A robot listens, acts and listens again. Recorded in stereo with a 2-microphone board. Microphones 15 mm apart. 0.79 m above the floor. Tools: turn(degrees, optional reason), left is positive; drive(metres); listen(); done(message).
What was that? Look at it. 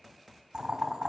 turn(degrees=-70, reason="The boiling: about 70° right or 110° right.")
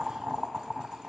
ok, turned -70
turn(degrees=-45, reason="So it is at 45° right.")
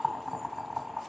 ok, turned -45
done("Facing the boiling.")